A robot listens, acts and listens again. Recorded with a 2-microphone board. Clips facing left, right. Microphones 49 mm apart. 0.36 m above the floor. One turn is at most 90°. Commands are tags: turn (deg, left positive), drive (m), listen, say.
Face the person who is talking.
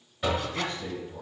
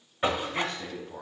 <turn deg="-60"/>
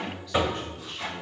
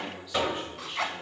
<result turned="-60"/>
<turn deg="-10"/>
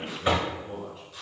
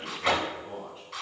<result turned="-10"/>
<say>Found it: a man speaking, straight ahead, 2 to 4 m away.</say>